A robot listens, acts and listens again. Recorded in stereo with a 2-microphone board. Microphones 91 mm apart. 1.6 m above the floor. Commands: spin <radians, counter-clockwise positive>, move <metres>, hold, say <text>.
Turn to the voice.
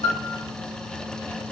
hold
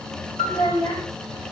spin 0.87
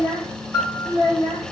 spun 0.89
spin 1.22
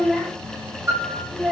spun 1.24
say Facing the child speaking.